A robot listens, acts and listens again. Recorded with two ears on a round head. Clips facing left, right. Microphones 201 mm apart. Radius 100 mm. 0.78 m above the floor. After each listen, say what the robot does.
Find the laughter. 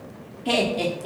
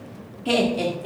Turn 30° right.
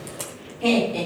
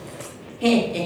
Turn 155° right.
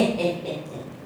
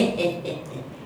Turn 25° right.
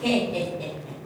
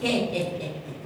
Turn 20° right.
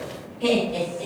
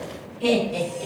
Found it: laughter, straight ahead, 2 to 4 m away.